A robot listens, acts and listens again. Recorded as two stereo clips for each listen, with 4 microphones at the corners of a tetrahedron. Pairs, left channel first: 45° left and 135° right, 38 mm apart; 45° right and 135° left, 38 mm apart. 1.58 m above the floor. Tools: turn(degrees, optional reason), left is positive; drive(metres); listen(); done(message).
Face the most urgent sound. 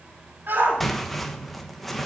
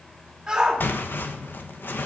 turn(degrees=-150, reason="The shout: 150° right.")
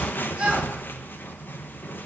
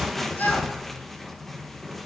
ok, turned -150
turn(degrees=-70, reason="The shout is now 70° right.")
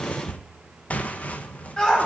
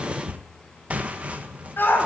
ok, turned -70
turn(degrees=-20, reason="The shout is now 20° right.")
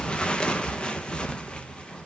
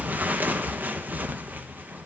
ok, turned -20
listen()
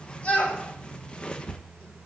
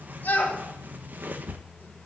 done("Facing the shout.")